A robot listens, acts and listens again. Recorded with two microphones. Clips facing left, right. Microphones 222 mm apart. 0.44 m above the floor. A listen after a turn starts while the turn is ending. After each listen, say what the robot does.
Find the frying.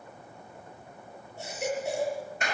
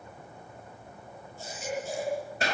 Keep listening.
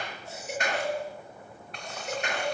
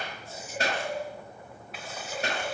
Turn 30° right.
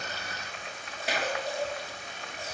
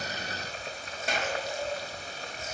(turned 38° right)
Turn 135° right.
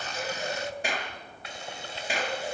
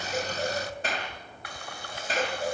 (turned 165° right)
Turn 30° left.
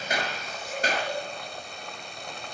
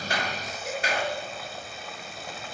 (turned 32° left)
Facing the frying, 1 to 2 m away.